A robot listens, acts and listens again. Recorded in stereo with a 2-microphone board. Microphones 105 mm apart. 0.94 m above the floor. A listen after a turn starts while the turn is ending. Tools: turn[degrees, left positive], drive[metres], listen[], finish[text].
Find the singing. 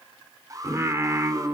Thought: The singing: about 25° right or 155° right.
Action: turn[-25]
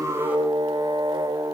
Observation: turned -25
Thought: So it is at 140° right.
Action: turn[-140]
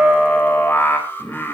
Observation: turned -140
Thought: The singing is now 15° left.
Action: turn[15]
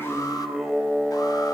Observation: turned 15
Action: finish[Facing the singing.]